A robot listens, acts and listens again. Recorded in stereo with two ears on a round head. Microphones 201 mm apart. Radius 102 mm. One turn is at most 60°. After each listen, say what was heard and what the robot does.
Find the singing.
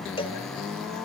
Keep listening.
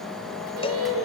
Turn 60° right.
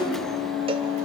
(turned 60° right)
So it is at 30° right. Turn 30° right.
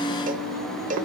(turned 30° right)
The singing is now 15° right. Turn 15° right.
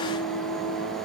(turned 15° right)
Facing the singing.